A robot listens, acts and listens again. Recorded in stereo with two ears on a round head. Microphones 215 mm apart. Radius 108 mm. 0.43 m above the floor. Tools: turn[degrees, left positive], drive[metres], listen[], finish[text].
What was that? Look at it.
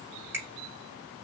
Action: turn[-30]
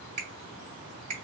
Thought: So it is at 135° right.
Action: turn[-135]
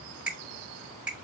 Action: finish[Facing the finger snap, 1 to 2 m away.]